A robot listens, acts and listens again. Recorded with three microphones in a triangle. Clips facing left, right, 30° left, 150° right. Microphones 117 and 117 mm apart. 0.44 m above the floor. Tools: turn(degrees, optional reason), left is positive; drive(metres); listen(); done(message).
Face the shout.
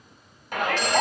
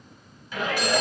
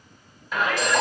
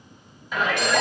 turn(degrees=120, reason="The shout: 120° left.")
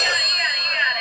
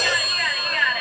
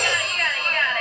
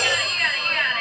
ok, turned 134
turn(degrees=-15, reason="The shout is now 15° right.")
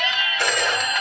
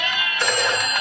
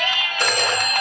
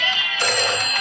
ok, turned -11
done("Facing the shout.")